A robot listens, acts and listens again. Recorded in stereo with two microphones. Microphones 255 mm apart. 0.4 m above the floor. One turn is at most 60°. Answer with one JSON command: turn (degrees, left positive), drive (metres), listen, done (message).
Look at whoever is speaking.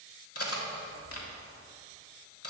{"listen": true}
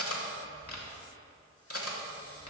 {"listen": true}
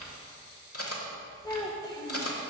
{"turn": 15}
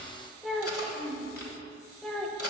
{"done": "Facing the child speaking, under 1 m away."}